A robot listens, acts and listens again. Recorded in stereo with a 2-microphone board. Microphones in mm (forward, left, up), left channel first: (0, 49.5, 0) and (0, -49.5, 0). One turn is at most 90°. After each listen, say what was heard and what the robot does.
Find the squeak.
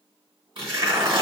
Keep listening.
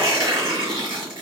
Keep listening.
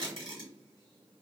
I can't make out a squeak, only tearing paper.